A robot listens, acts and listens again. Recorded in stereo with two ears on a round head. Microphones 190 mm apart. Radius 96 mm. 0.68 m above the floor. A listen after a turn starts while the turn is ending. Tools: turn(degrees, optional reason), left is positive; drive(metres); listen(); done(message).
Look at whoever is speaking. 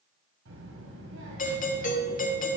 turn(degrees=-70, reason="The child speaking: about 70° right or 110° right.")
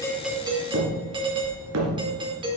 turn(degrees=-20, reason="So it is at 20° right.")
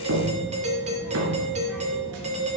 listen()
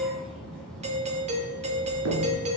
done("Facing the child speaking, over 4 m away.")